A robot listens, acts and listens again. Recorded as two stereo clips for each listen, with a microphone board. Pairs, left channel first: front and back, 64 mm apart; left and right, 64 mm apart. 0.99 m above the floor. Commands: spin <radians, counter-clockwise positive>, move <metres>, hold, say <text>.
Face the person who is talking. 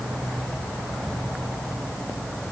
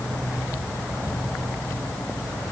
hold
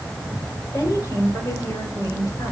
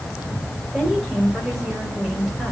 say Found it: a woman speaking, straight ahead.